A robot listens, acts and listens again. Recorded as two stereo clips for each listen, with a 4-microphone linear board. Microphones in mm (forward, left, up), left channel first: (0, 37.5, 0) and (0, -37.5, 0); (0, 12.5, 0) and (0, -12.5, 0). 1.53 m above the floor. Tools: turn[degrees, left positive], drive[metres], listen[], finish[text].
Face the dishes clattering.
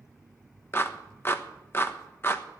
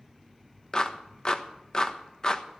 Action: listen[]
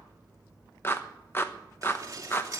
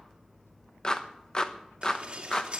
Thought: The dishes clattering: about 45° right or 135° right.
Action: turn[-45]
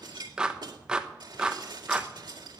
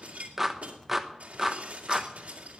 Thought: So it is at 85° right.
Action: turn[-85]
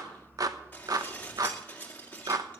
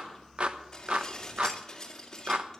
Thought: The dishes clattering is now 25° left.
Action: turn[25]
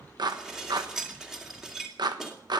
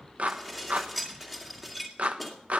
Action: finish[Found it: dishes clattering, straight ahead, 2 to 4 m away.]